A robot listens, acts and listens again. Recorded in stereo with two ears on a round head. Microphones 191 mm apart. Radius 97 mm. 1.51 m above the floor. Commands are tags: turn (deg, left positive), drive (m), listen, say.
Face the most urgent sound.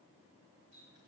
<listen/>
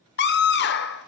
<turn deg="50"/>
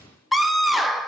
<say>Facing the scream, 1 to 2 m away.</say>